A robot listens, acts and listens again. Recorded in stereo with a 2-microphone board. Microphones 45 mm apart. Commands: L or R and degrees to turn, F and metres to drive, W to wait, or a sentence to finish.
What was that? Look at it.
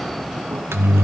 R65
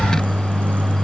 R45
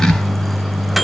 Found it: a microwave, straight ahead, under 1 m away.